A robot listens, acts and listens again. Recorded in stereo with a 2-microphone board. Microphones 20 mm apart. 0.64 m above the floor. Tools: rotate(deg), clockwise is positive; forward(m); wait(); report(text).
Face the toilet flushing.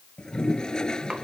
rotate(-40)
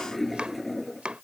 report("Facing the toilet flushing.")